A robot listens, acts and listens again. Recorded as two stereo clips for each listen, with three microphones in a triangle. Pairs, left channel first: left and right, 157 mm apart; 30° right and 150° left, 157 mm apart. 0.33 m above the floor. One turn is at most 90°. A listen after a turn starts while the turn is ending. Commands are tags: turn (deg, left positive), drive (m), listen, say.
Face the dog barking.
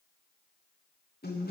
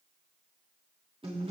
<listen/>
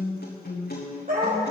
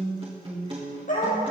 <turn deg="-65"/>
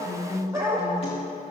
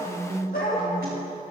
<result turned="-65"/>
<turn deg="-20"/>
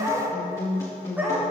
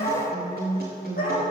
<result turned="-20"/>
<turn deg="-10"/>
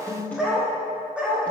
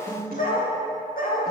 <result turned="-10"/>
<say>Facing the dog barking.</say>